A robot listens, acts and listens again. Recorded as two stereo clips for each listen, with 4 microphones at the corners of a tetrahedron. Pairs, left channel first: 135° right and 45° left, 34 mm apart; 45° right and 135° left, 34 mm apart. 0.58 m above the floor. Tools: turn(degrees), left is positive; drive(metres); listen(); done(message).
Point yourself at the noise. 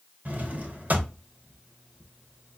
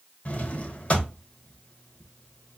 turn(degrees=10)
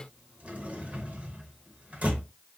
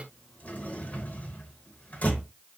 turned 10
done("Facing the drawer, under 1 m away.")